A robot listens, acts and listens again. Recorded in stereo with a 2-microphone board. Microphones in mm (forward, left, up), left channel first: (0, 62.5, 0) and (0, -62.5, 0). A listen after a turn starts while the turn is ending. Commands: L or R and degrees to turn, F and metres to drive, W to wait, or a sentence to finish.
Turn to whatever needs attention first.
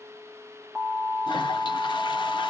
L30
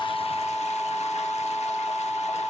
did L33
L150
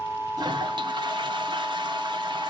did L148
Found it: an alarm, straight ahead, 2 to 4 m away.